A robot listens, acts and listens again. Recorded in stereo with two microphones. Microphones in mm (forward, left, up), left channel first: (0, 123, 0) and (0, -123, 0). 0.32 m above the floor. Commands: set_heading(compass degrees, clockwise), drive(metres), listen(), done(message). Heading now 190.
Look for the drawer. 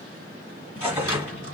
set_heading(125)
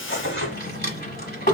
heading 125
set_heading(80)
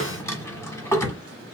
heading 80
set_heading(70)
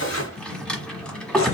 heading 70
done("Found it: a drawer, straight ahead.")